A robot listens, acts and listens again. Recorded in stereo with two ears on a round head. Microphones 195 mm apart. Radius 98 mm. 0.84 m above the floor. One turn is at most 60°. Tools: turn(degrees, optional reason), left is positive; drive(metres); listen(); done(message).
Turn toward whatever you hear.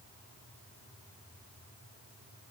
listen()
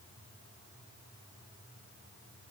listen()
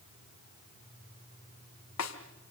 turn(degrees=60)
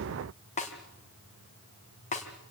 turn(degrees=30, reason="So it is at 30° left.")
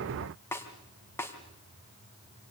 turn(degrees=10, reason="The snare drum is now 10° left.")
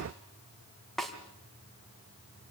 done("Found it: a snare drum, straight ahead, 2 to 4 m away.")